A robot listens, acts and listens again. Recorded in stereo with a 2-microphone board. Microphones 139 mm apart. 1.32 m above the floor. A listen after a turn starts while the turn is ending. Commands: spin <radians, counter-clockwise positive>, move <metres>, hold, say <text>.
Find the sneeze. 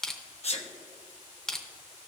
spin 0.87
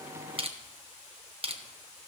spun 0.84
hold
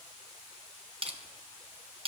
say I heard a sneeze, but can't make it out now. It was about straight ahead or 85° left.